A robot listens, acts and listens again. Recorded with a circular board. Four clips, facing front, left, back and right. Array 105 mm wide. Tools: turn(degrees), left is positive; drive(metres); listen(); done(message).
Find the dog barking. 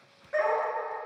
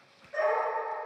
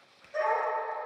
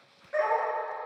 turn(degrees=-35)
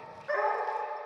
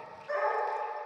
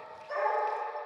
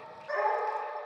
turn(degrees=-10)
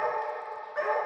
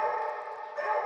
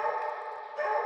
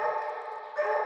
turn(degrees=-20)
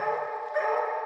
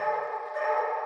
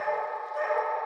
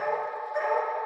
turn(degrees=-20)
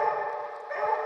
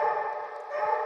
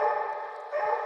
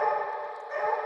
turn(degrees=-15)
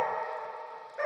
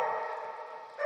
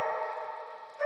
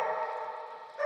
done("Found it: a dog barking, straight ahead, 1 to 2 m away.")